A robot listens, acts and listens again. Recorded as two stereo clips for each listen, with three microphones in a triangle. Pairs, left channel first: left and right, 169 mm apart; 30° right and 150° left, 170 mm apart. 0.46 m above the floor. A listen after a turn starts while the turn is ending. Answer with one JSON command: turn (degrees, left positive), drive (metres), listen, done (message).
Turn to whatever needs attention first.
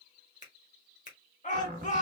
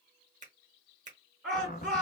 {"turn": 65}
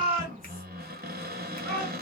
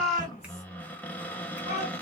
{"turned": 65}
{"turn": 15}
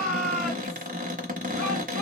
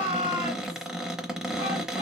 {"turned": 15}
{"done": "Found it: a shout, straight ahead, 2 to 4 m away."}